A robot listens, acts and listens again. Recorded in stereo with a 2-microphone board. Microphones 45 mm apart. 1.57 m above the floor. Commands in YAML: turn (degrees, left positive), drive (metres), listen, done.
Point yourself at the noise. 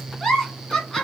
turn: 30
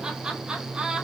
listen: true
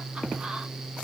listen: true
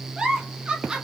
turn: -20
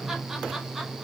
listen: true
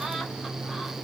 listen: true
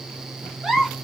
done: "Found it: a giggle, straight ahead."